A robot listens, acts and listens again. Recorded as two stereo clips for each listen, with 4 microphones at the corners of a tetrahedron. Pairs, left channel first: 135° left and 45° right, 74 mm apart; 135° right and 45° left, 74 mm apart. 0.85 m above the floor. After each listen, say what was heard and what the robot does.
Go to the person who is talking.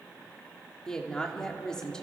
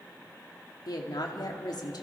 The woman speaking: 145° right. Turn 145° right.
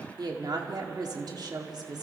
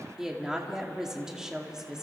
The woman speaking is now 35° right. Turn 35° right.
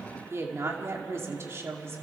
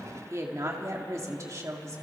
Drive 1.0 m forward.
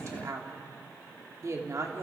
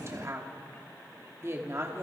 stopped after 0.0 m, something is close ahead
Blocked. The woman speaking is further on, straight ahead.